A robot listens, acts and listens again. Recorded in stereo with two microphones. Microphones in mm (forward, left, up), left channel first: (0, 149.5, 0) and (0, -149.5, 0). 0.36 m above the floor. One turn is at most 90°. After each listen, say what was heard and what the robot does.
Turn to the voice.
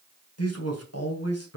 The man speaking: about 55° left or 125° left. Turn 55° left.
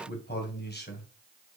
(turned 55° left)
So it is at 40° left. Turn 40° left.
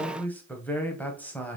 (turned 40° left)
Found it: a man speaking, straight ahead.